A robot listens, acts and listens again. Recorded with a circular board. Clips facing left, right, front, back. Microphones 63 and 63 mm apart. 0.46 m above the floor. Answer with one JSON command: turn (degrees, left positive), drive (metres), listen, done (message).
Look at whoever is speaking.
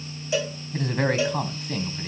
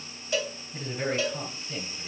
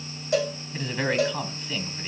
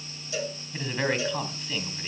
{"turn": 90}
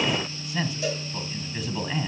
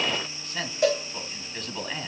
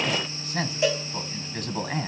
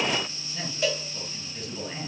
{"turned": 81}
{"done": "Found it: a man speaking, straight ahead, 2 to 4 m away."}